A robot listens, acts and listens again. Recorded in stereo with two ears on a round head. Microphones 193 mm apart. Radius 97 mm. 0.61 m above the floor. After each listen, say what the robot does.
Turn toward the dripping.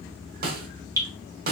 Turn 15° right.
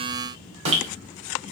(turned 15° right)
Turn 150° right.
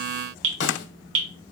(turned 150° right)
Turn 60° right.
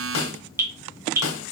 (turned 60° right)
Turn 15° right.
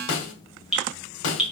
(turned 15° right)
Found it: dripping, straight ahead, 1 to 2 m away.